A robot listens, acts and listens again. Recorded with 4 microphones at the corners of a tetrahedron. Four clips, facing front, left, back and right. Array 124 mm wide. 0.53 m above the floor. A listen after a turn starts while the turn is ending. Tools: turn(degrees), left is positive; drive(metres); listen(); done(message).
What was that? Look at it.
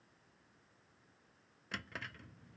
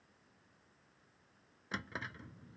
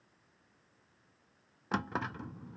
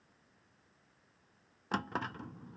turn(degrees=-145)
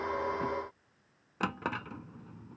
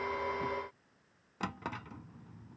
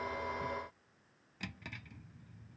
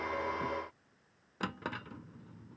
done("Facing the drawer.")